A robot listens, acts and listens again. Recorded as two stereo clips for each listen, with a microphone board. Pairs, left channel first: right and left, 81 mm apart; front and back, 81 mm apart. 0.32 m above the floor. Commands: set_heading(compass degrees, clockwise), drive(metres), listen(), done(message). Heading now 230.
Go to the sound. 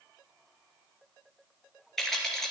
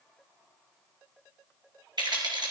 set_heading(45)
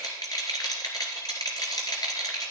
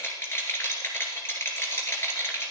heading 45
set_heading(100)
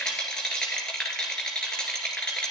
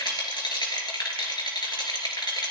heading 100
set_heading(110)
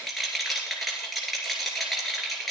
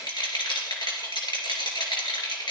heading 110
drive(1.0)
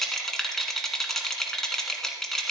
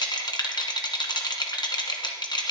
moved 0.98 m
drive(1.0)
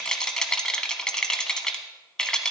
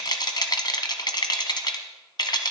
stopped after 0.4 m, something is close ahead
set_heading(120)
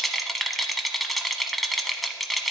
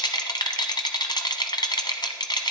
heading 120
done("I am next to the rattle.")